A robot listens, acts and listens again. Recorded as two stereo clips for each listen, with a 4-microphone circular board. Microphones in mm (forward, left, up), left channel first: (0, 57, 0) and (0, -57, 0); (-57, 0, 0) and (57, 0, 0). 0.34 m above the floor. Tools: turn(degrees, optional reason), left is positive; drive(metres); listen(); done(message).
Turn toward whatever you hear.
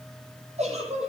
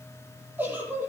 turn(degrees=-70, reason="The giggle: 70° right.")
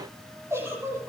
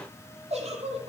turn(degrees=-25, reason="The giggle is now 25° right.")
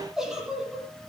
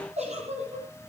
done("Found it: a giggle, straight ahead.")